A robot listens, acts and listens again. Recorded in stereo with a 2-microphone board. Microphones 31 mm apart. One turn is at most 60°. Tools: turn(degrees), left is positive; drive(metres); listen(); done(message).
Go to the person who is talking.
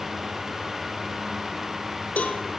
listen()
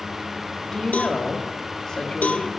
turn(degrees=20)
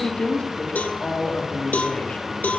turn(degrees=60)
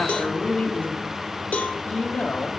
turn(degrees=60)
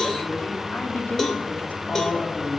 turn(degrees=60)
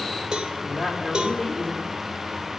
turn(degrees=20)
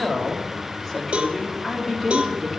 drive(metres=1.0)
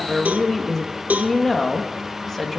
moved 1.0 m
turn(degrees=10)
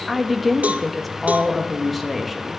drive(metres=1.0)
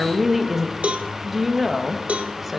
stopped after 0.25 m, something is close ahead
done("Arrived at the woman speaking, straight ahead.")